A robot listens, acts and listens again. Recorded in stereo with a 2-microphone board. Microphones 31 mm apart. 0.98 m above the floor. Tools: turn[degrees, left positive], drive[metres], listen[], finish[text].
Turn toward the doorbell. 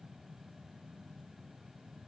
Action: listen[]
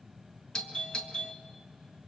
Thought: The doorbell: about 25° left or 155° left.
Action: turn[25]
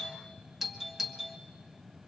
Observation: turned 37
Action: finish[Found it: a doorbell, straight ahead, 1 to 2 m away.]